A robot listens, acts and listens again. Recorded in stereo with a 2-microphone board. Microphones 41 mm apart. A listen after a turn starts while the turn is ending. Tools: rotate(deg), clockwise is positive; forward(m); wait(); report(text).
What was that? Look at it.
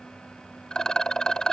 rotate(-15)
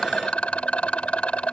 rotate(-150)
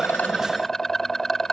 rotate(-10)
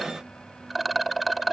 report("Facing the rattle.")